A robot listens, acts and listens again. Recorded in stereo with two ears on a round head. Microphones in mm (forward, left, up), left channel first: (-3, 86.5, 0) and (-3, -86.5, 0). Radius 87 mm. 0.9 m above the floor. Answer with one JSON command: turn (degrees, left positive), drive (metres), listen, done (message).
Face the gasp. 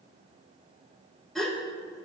{"turn": 30}
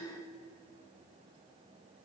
{"listen": true}
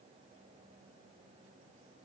{"done": "I heard a gasp, but can't make it out now. It was about 30° right or 150° left."}